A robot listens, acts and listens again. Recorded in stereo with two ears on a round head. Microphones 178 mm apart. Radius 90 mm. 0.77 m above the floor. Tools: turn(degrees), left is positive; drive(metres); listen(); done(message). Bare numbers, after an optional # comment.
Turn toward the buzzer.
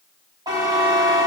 # The buzzer: about 20° right or 160° right.
turn(-20)
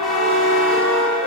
done("Facing the buzzer.")